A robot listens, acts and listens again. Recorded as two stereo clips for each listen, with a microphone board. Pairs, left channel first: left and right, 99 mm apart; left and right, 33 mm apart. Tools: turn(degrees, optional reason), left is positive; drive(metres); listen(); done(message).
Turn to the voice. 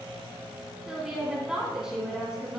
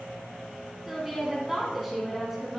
turn(degrees=-30)
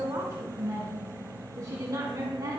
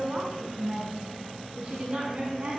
turn(degrees=-145, reason="So it is at 145° right.")
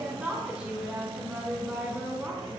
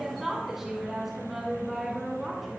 turn(degrees=-10, reason="The woman speaking is now 10° right.")
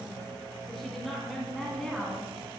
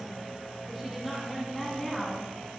done("Facing the woman speaking.")